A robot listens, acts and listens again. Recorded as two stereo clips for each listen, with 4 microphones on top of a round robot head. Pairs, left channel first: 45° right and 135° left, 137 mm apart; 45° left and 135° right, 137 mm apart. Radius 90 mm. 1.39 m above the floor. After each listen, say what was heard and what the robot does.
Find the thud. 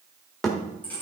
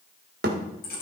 The thud: 130° right. Turn 130° right.
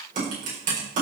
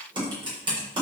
I heard a thud from this way, but can't make it out now.